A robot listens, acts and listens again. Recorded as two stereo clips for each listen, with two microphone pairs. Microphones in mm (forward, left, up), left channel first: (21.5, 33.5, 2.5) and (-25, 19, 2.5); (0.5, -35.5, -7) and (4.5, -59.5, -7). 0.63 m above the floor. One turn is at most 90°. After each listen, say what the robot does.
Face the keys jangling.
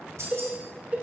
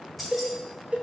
Turn 90° right.
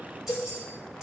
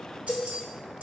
Turn 90° right.
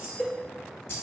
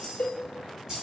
Turn 20° right.
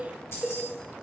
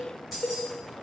Facing the keys jangling, 2 to 4 m away.